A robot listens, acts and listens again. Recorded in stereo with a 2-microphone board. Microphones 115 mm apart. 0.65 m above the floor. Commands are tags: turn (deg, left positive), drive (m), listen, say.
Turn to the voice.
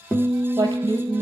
<turn deg="-40"/>
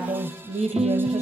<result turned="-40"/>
<turn deg="-100"/>
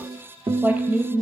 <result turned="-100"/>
<turn deg="-20"/>
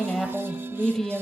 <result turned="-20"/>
<say>Facing the woman speaking.</say>